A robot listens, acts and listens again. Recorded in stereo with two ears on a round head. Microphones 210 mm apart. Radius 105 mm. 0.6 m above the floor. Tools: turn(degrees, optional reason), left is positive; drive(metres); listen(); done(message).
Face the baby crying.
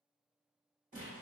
listen()
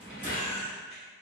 turn(degrees=45, reason="The baby crying: about 45° left or 135° left.")
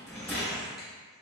listen()
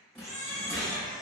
done("Found it: a baby crying, straight ahead, 1 to 2 m away.")